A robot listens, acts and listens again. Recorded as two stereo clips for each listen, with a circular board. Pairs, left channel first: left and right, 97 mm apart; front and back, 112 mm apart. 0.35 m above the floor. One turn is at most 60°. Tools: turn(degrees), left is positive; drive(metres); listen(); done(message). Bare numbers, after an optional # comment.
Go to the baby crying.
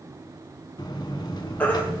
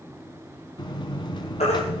# The baby crying: 15° left.
turn(15)
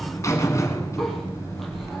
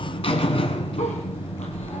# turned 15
listen()
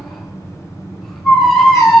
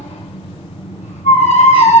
drive(1.0)
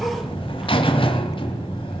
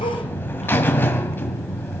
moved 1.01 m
listen()
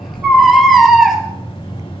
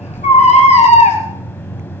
drive(1.0)
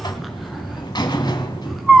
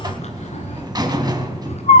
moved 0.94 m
drive(1.0)
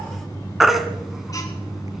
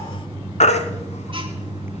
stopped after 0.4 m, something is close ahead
done("Arrived at the baby crying, straight ahead.")